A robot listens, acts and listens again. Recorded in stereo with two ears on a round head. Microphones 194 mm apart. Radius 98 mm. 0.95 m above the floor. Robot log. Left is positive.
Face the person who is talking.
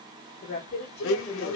note: The woman speaking: about 45° left or 135° left.
cmd yaw +45
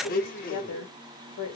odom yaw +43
note: So it is at 90° left.
cmd yaw +90
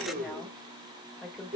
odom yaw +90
end: Found it: a woman speaking, straight ahead.